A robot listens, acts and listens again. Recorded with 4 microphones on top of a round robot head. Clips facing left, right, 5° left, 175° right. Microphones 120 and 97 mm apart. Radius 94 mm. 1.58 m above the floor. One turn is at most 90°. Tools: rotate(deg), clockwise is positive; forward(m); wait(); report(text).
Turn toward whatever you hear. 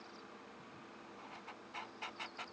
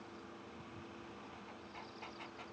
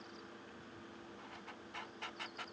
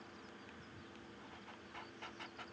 wait()
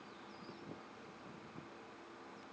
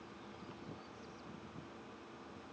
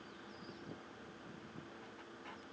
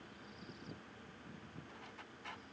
wait()
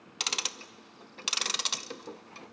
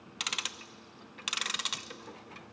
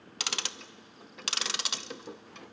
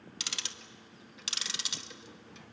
rotate(-35)
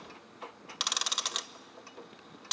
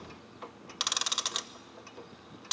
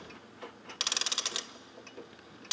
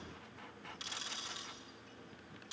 report("Found it: ticking, straight ahead.")